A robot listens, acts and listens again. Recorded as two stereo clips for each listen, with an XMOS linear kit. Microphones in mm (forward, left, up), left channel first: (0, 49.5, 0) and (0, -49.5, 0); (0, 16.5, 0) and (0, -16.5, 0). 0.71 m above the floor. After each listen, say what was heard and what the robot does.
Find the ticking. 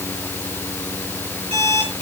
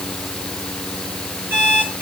Keep listening.
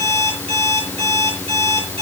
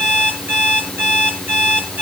Keep listening.
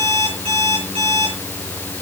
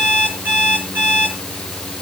I can't make out ticking to turn to.